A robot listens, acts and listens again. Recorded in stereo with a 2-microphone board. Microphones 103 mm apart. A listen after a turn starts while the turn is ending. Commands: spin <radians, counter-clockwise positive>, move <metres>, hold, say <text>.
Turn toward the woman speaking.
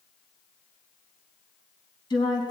spin 0.79
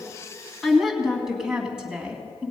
spin -0.26
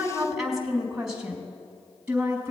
spin -0.26
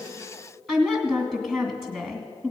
say Found it: a woman speaking, straight ahead, 2 to 4 m away.